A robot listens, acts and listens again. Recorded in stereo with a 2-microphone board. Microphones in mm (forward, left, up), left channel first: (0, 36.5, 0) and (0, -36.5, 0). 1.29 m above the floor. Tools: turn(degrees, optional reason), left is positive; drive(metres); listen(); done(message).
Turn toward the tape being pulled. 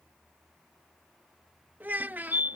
listen()
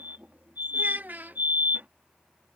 listen()
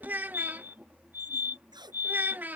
turn(degrees=-70, reason="The tape being pulled: about 70° right or 110° right.")
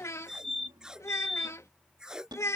turn(degrees=-10, reason="So it is at 10° right.")
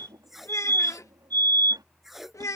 done("Facing the tape being pulled.")